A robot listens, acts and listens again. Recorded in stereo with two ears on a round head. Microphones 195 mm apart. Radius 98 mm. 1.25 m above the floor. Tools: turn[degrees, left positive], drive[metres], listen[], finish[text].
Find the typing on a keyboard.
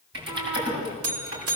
Thought: The typing on a keyboard: about 50° right or 130° right.
Action: turn[-50]
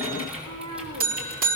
Action: finish[Found it: typing on a keyboard, straight ahead, over 4 m away.]